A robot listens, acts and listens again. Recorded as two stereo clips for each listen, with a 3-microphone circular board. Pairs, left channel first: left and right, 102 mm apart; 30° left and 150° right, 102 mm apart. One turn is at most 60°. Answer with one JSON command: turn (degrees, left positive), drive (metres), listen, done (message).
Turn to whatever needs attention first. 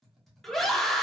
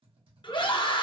{"done": "Facing the scream."}